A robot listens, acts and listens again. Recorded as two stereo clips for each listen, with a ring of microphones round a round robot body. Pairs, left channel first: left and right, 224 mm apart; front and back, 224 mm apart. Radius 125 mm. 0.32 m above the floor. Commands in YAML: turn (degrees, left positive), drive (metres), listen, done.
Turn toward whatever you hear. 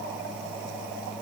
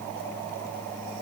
listen: true
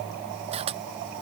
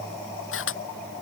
turn: -25
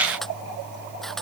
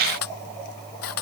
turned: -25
done: "Found it: a camera shutter, straight ahead."